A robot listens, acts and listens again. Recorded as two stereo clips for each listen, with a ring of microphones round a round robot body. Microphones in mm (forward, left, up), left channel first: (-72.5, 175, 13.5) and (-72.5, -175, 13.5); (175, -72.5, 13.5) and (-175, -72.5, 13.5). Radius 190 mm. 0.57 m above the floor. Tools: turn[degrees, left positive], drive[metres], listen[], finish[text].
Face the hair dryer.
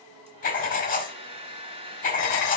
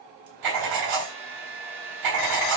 Thought: The hair dryer: 165° right.
Action: turn[-165]
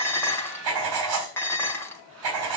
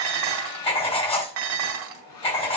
Thought: The hair dryer is now 35° right.
Action: turn[-35]
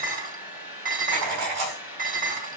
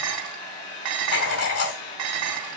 Action: finish[Facing the hair dryer.]